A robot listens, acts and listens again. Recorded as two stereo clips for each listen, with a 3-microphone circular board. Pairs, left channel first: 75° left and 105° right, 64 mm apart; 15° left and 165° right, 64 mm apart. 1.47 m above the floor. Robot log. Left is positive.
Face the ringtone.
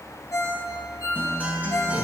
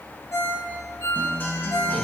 note: The ringtone: 50° left.
cmd yaw +50
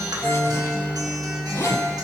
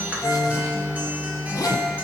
cmd idle
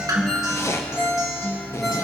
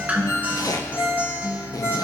note: The ringtone is now 10° right.
cmd yaw -10
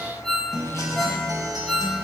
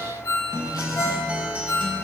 end: Found it: a ringtone, straight ahead.